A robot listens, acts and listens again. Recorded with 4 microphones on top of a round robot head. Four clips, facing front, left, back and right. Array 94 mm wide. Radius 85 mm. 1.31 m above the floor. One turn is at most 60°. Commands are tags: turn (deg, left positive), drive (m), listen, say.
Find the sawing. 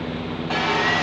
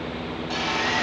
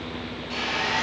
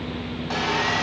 <turn deg="-30"/>
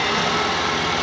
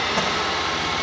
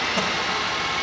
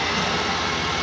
<turn deg="-10"/>
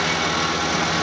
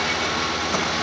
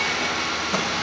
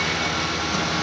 <say>Facing the sawing, 1 to 2 m away.</say>